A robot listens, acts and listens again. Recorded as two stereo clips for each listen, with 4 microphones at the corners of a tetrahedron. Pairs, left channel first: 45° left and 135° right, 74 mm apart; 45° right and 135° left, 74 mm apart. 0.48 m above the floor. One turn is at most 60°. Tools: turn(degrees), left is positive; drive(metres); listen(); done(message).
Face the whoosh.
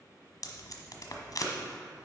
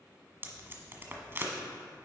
listen()
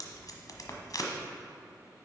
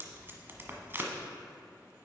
listen()
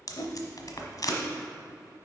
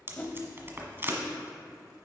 turn(degrees=25)
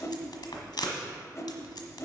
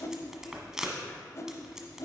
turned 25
done("Found it: a whoosh, straight ahead, under 1 m away.")